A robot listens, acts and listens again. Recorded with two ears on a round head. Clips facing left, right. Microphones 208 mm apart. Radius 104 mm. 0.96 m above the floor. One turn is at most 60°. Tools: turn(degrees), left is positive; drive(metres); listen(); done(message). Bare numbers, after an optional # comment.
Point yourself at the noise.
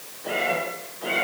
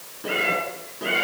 # The cat meowing: about 65° right or 115° right.
turn(-60)
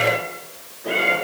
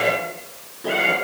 # So it is at 55° right.
turn(-55)
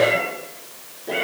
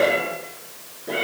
done("Facing the cat meowing, over 4 m away.")